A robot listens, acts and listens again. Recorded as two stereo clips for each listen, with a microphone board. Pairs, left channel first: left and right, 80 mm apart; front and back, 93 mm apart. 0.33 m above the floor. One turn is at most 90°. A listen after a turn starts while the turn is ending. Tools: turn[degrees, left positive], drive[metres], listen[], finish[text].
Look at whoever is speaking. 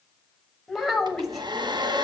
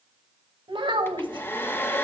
Thought: The child speaking: straight behind.
Action: turn[90]
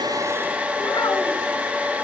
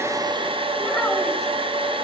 Thought: Nothing new. It was at 90° left.
Action: turn[90]
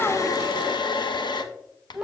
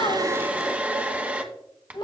Thought: The child speaking is now 10° right.
Action: turn[-10]
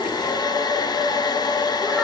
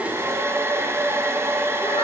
Action: listen[]
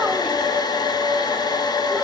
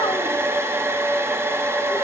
Action: listen[]
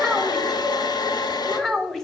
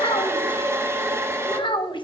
Action: finish[Facing the child speaking.]